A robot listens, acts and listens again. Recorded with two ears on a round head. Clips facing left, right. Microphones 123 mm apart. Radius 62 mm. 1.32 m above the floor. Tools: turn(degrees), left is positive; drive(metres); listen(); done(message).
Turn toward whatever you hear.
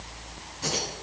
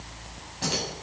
turn(degrees=-75)
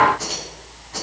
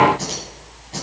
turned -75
turn(degrees=-30)
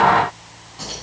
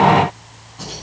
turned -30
done("Found it: keys jangling, straight ahead, over 4 m away.")